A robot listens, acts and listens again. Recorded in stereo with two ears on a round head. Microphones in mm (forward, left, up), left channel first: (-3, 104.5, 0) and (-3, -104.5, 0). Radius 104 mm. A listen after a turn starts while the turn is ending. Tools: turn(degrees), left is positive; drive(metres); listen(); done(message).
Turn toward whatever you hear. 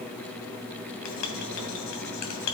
turn(degrees=90)
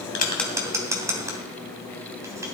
turn(degrees=-15)
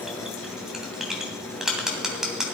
done("Found it: writing, straight ahead, 2 to 4 m away.")